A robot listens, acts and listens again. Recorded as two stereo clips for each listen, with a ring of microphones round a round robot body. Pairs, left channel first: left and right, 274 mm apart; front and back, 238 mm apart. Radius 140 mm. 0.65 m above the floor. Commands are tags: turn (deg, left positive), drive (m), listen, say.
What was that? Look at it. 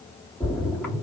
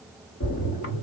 <say>Found it: a splash, straight ahead.</say>